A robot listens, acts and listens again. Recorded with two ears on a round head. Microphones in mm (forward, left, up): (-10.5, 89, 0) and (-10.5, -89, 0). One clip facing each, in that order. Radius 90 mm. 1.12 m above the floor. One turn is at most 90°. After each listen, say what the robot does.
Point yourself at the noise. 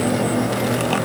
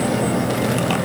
Keep listening.
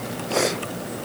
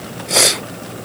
Keep listening.
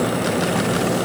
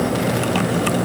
I can't make out anything.